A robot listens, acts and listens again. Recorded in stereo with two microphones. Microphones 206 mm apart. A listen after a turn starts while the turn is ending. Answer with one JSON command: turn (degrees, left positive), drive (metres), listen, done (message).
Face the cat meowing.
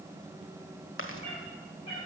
{"turn": 30}
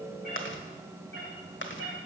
{"turn": 115}
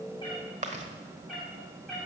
{"done": "Found it: a cat meowing, straight ahead, over 4 m away."}